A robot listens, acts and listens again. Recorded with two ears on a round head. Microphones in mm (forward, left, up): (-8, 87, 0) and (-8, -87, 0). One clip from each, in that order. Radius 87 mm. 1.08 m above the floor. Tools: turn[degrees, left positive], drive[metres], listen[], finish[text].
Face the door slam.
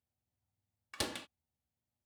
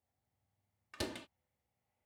Thought: The door slam: about 30° left or 150° left.
Action: turn[30]
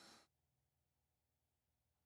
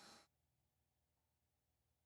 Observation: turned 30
Action: listen[]
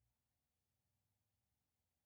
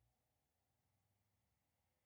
Action: finish[I heard a door slam, but can't make it out now. It was about straight ahead or 120° left.]